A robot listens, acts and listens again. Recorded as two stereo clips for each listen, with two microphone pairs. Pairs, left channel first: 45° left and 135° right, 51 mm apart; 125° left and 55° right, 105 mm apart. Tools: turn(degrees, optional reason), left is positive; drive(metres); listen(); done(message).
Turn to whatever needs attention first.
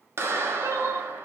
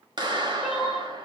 turn(degrees=-135, reason="The crying: 135° right.")
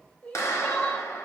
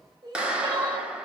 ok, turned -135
turn(degrees=-15, reason="The crying is now 15° right.")
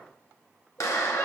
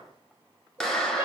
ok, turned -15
listen()
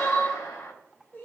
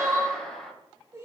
done("Found it: crying, straight ahead, 1 to 2 m away.")